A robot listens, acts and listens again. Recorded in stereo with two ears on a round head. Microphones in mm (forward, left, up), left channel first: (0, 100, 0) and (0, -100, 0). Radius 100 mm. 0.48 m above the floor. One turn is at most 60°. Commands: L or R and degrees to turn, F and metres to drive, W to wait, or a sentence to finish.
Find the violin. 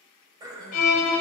L60
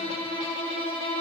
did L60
L25
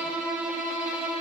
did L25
Facing the violin, under 1 m away.